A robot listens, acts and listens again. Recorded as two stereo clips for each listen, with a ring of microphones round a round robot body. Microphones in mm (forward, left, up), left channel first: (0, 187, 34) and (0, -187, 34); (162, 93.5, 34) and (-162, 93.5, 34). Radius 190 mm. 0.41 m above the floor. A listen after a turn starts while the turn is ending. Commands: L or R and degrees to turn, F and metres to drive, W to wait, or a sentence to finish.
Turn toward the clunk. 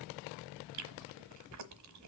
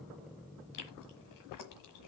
W
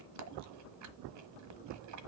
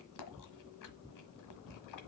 W
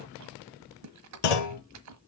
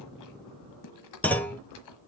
L85
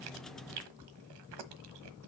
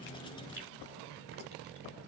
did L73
L10
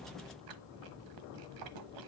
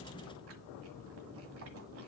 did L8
I heard a clunk from this way, but can't make it out now.